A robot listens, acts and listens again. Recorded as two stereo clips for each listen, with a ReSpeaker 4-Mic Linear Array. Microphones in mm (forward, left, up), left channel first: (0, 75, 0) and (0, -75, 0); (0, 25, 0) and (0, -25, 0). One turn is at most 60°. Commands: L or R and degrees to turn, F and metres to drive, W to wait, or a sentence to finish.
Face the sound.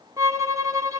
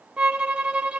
R20
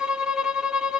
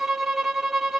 Facing the violin, 1 to 2 m away.